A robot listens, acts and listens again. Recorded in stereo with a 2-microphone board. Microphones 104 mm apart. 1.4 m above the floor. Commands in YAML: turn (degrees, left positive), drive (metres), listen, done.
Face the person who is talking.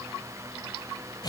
listen: true
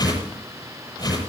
listen: true
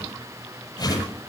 done: "I can't make out anyone speaking, only a whoosh."